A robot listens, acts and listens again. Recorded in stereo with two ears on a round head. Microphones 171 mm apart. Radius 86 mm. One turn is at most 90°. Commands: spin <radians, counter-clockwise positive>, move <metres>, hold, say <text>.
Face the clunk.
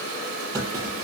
spin -0.26
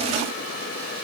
hold
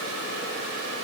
say I heard a clunk, but can't make it out now. It was about straight ahead or 150° right.